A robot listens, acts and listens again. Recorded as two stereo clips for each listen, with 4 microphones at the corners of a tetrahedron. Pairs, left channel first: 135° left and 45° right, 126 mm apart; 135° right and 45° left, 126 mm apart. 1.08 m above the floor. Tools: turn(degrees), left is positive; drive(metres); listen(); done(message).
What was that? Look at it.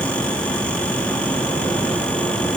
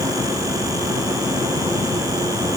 listen()
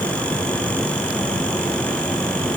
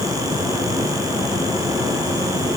listen()
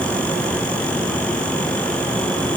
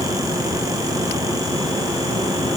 done("I can't make out anything to turn to.")